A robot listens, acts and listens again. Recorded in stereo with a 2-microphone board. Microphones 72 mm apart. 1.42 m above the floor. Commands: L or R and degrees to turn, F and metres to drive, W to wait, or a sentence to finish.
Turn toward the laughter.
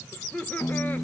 L20
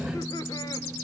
W
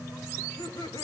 L105
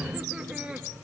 R15
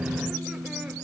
W
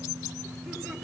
W
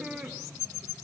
Facing the laughter.